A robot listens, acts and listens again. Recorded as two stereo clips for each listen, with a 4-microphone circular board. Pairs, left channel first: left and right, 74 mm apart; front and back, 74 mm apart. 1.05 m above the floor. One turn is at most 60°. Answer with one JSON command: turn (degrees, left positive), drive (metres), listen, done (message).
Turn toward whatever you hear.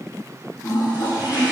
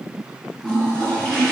{"turn": 60}
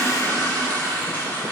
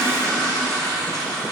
{"turn": 30}
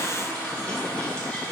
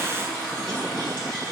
{"turn": 15}
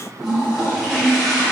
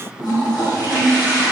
{"done": "Found it: a toilet flushing, straight ahead."}